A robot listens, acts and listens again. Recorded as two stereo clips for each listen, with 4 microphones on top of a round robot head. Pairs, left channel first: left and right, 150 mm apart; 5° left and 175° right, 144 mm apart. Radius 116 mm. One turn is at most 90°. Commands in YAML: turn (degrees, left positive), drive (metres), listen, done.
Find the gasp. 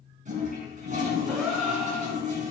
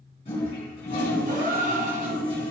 turn: -90
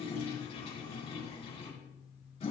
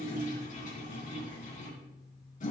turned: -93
turn: -80
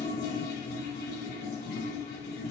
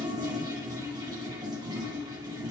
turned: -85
done: "I heard a gasp from this way, but can't make it out now."